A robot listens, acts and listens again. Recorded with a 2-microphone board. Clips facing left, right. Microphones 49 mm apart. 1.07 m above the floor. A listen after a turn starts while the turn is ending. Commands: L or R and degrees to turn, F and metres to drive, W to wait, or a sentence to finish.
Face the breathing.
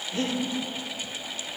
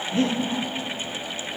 R35
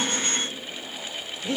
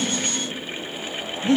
R115
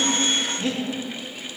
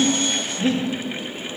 Facing the breathing, 1 to 2 m away.